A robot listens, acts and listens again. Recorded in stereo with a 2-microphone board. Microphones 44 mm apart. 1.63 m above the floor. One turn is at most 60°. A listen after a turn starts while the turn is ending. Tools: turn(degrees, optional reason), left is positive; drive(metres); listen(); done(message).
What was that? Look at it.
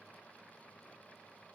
listen()
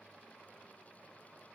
listen()
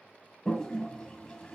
turn(degrees=15, reason="The toilet flushing: about 15° left or 165° left.")
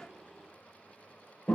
turn(degrees=60, reason="So it is at 150° left.")
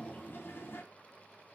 turn(degrees=60, reason="The toilet flushing is now 110° left.")
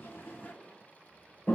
turn(degrees=40, reason="The toilet flushing is now 40° left.")
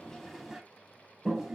turn(degrees=-10, reason="The toilet flushing is now 10° right.")
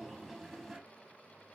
done("Facing the toilet flushing.")